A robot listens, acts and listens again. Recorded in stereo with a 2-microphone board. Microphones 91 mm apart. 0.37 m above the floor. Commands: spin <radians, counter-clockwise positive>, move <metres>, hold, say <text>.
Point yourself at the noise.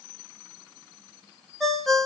spin 0.52
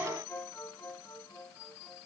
hold
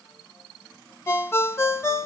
spin 2.62
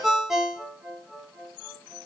say Found it: a ringtone, straight ahead, under 1 m away.